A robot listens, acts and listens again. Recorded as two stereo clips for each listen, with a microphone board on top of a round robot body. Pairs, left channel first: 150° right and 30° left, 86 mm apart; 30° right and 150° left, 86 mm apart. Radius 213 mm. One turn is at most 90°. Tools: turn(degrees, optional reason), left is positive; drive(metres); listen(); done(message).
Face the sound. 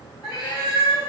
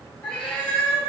turn(degrees=-90, reason="The cat meowing: 115° right.")
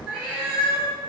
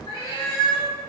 turn(degrees=-65, reason="The cat meowing is now 65° right.")
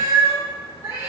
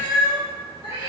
turn(degrees=-35, reason="The cat meowing is now 35° right.")
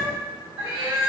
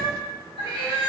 turn(degrees=-35, reason="The cat meowing is now 35° right.")
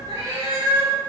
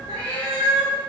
turn(degrees=-20, reason="The cat meowing is now 20° right.")
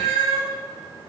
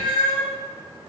done("Facing the cat meowing.")